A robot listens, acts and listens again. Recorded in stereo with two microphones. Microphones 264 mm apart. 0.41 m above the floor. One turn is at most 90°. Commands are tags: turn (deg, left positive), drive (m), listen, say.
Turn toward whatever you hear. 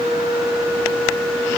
<listen/>
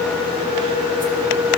<listen/>
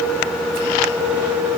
<say>I can't make out anything.</say>